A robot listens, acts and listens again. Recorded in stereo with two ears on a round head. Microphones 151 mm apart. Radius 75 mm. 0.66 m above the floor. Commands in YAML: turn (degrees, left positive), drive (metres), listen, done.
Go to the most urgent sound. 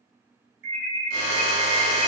turn: -70
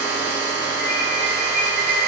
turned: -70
drive: 1.0
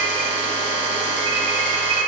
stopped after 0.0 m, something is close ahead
done: "Something is in my way. I am facing the alarm but have not reached it."